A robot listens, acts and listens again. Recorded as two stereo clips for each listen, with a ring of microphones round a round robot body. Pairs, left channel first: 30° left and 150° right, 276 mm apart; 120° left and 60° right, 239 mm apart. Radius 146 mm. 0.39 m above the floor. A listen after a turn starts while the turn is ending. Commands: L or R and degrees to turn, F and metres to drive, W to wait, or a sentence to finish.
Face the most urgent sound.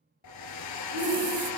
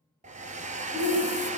R145
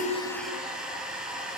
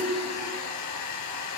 W
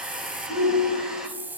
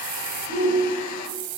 R20
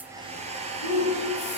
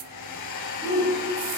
Found it: a shout, straight ahead.